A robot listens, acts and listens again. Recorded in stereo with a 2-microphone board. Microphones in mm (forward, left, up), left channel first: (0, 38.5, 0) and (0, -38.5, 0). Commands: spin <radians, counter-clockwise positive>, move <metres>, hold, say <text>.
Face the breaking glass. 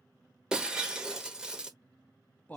spin -0.52
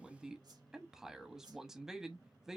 hold
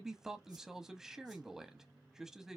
say I heard breaking glass, but can't make it out now. It was about 20° left or 140° right.